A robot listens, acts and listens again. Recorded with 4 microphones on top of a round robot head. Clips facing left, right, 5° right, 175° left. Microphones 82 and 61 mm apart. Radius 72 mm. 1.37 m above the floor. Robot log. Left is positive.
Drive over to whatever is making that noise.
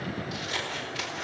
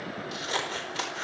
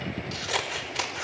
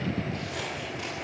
note: The scissors: 30° right.
cmd yaw -30
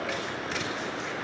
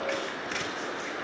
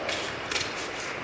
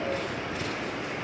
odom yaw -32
cmd fwd 1.0
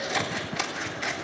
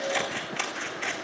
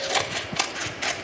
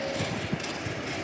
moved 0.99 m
cmd fwd 1.0
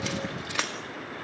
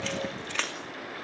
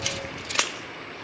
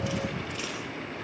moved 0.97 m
note: The scissors is now 10° left.
cmd yaw +10
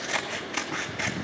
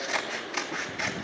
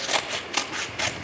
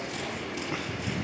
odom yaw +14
cmd fwd 1.0
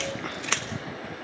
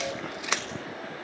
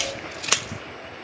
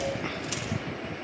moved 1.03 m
note: The scissors is now 10° right.
cmd yaw -10
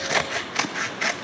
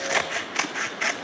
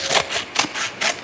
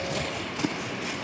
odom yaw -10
cmd fwd 1.0
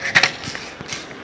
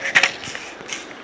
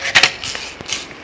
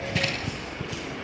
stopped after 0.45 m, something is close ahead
end: Arrived at the scissors, straight ahead.